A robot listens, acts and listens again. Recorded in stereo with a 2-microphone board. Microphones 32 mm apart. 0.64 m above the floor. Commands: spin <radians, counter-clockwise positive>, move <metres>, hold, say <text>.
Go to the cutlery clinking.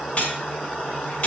spin 0.61
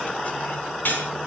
spin 1.92
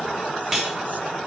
move 1.0
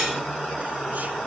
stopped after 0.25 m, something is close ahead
hold
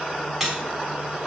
say Blocked. The cutlery clinking is further on, straight ahead.